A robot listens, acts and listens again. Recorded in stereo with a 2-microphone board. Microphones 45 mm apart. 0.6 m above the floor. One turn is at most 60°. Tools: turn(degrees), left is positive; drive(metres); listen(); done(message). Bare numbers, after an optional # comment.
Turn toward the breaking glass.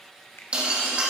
# The breaking glass: about 25° right or 155° right.
turn(-25)
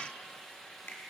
listen()
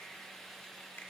done("I heard breaking glass, but can't make it out now. It was about straight ahead or 130° right.")